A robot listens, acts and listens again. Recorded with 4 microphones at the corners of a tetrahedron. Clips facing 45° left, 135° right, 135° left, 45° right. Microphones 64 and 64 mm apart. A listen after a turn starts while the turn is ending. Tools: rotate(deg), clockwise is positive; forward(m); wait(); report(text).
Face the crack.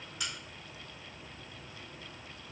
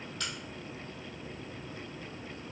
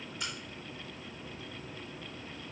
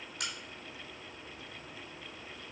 rotate(30)
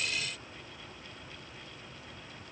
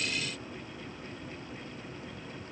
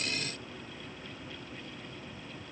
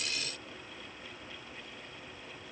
report("Facing where the crack came from. I can't hear it now.")